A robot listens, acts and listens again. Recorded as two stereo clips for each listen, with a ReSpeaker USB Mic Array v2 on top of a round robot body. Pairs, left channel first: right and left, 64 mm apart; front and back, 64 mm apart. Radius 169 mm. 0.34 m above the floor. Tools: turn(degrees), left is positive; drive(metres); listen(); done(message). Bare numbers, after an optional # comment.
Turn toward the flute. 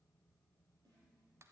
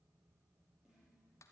listen()
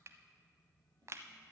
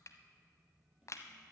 listen()
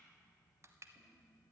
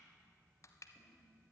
done("I can't make out a flute to turn to.")